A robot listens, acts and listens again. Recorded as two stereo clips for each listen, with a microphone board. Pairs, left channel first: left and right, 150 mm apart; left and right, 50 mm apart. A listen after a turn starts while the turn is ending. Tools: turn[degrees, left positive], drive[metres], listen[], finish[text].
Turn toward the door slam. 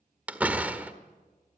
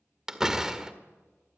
Action: turn[-30]
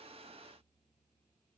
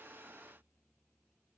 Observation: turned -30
Action: listen[]
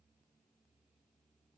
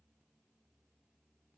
Action: finish[I heard a door slam, but can't make it out now. It was about 20° left or 140° right.]